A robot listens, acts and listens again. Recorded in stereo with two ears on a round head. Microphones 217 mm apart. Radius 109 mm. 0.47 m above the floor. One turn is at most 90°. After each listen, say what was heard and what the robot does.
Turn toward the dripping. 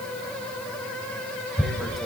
Keep listening.
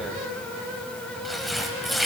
Keep listening.
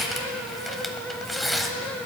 I can't make out dripping to turn to.